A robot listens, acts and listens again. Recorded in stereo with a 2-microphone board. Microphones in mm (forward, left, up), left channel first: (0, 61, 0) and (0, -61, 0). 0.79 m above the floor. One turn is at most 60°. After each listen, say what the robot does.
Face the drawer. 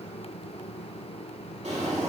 Turn 60° right.
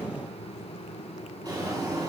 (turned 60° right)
Turn 35° right.
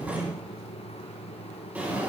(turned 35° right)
Turn 15° right.
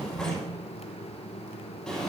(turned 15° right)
Found it: a drawer, straight ahead, 2 to 4 m away.